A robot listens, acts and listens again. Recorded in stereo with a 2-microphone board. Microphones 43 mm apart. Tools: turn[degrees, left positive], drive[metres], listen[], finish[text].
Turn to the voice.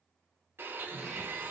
Action: listen[]
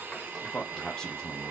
Action: turn[30]
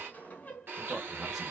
Action: turn[30]
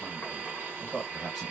Action: turn[30]
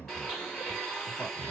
Thought: So it is at 150° left.
Action: turn[150]
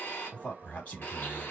Thought: The man speaking is now 25° left.
Action: turn[25]
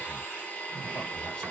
Action: listen[]
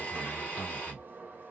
Thought: The man speaking is now 10° left.
Action: turn[10]
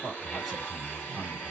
Action: finish[Facing the man speaking.]